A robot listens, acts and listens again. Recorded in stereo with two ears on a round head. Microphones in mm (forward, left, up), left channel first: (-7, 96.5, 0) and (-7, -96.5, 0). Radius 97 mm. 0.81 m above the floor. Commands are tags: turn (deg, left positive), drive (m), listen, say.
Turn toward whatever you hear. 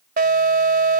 <turn deg="-45"/>
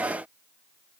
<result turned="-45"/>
<listen/>
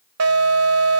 <turn deg="-90"/>
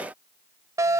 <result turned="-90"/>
<turn deg="-15"/>
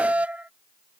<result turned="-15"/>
<say>Facing the alarm.</say>